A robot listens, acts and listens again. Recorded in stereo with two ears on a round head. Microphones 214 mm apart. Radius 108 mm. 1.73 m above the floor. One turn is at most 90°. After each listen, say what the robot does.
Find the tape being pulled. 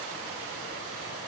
Keep listening.
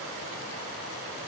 Keep listening.
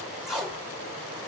Turn 30° right.
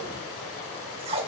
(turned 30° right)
Turn 90° right.
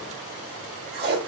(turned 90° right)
Turn 55° right.
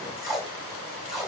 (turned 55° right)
Found it: tape being pulled, straight ahead.